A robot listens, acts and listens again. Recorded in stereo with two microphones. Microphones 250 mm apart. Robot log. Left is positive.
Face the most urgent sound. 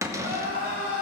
note: The crying: about 35° right or 145° right.
cmd yaw -35
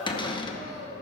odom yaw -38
note: So it is at 110° right.
cmd yaw -110
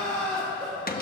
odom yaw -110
end: Facing the crying.